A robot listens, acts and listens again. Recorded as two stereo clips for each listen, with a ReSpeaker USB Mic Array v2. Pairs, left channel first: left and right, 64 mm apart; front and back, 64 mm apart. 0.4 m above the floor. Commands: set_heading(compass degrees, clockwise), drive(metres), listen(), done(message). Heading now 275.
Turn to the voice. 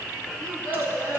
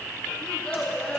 set_heading(350)
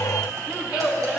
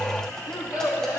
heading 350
set_heading(5)
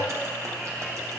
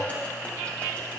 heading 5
listen()
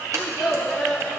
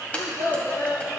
done("Facing the child speaking, 2 to 4 m away.")